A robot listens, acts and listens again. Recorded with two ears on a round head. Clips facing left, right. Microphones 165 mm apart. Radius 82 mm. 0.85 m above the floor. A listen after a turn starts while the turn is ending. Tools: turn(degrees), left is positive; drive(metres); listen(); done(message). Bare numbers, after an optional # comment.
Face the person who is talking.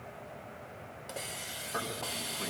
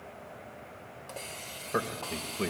# The man speaking: about 60° right or 120° right.
turn(-60)
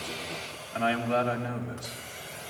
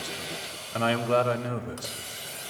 # So it is at 60° right.
turn(-60)
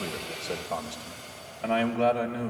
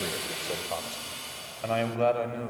done("Facing the man speaking.")